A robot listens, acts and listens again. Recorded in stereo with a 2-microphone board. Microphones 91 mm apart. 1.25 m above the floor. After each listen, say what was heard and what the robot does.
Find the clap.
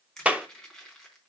Turn 30° right.
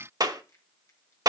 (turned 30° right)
So it is at 135° right. Turn 135° right.
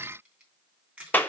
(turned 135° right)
The clap is now 20° left. Turn 20° left.
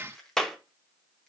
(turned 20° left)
Facing the clap.